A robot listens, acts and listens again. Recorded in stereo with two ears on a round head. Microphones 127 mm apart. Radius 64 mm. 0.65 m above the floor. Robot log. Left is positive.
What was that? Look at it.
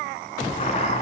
note: The chopping: about 45° left or 135° left.
cmd yaw +45
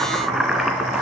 end: Facing the chopping.